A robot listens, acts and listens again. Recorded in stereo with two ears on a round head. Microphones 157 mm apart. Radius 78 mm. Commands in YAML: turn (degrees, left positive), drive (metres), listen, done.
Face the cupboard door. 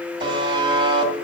listen: true
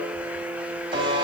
listen: true
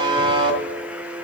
done: "I can't make out a cupboard door, only a buzzer."